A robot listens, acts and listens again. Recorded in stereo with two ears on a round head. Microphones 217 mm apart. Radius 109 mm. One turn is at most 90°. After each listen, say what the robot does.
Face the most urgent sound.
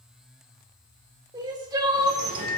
Turn 15° right.
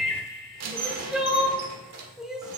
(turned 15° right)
Found it: crying, straight ahead, 1 to 2 m away.